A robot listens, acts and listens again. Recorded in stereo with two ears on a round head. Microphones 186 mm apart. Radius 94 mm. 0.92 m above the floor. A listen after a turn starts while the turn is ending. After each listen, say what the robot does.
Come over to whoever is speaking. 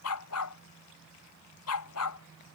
Keep listening.
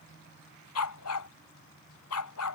Keep listening.
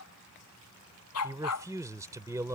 Turn 15° right.
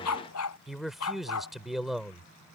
Drive 1.0 m forward.
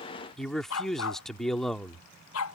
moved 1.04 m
Drive 1.0 m forward.
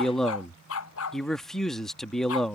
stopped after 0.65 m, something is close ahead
I am next to the man speaking.